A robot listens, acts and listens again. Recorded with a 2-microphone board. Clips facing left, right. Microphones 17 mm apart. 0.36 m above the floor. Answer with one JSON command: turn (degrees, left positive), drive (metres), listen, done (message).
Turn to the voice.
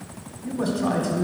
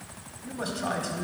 {"turn": -20}
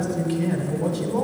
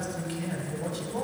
{"done": "Facing the man speaking, 1 to 2 m away."}